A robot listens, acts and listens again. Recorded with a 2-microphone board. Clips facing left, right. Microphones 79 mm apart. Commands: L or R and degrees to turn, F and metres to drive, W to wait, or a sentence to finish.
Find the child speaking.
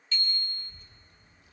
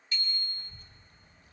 R50
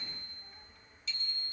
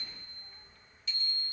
L15
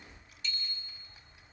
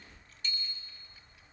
L25
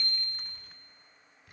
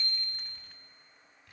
L15
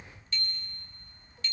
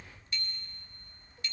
Found it: a child speaking, straight ahead, 2 to 4 m away.